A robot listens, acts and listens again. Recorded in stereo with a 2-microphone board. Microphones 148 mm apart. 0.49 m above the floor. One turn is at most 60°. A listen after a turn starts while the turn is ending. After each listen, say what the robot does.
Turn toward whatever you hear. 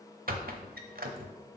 Turn 60° right.
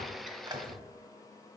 Turn 30° right.
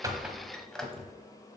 Found it: a squeak, straight ahead.